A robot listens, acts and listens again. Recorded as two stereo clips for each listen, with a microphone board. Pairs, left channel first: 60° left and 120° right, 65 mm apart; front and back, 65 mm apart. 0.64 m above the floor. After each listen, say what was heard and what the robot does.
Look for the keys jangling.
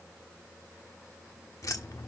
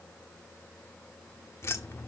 The keys jangling: 40° left. Turn 40° left.
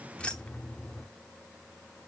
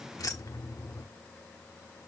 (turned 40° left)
The keys jangling is now 10° right. Turn 10° right.
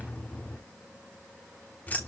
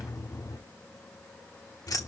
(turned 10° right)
Found it: keys jangling, straight ahead, 1 to 2 m away.